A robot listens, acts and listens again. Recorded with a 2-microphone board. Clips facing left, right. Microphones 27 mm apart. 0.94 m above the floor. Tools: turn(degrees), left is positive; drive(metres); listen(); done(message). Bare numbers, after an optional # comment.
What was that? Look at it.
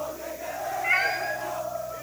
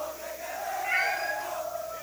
# The cat meowing: about 40° left or 140° left.
turn(40)
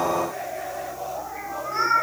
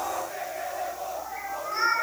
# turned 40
done("Found it: a cat meowing, straight ahead.")